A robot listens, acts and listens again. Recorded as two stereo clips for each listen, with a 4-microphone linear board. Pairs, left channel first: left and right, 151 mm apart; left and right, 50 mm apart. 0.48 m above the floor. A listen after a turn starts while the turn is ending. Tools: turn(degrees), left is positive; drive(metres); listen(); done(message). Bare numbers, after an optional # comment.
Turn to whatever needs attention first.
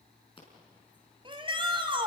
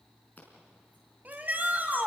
# The shout: about 35° right or 145° right.
turn(-35)
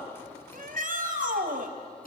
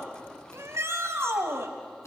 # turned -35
# So it is at 110° right.
turn(-110)
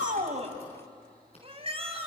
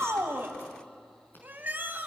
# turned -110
# The shout is now 40° right.
turn(-40)
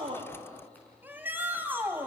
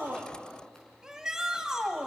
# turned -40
# The shout is now 10° right.
turn(-10)
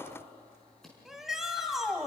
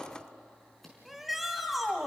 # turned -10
done("Facing the shout.")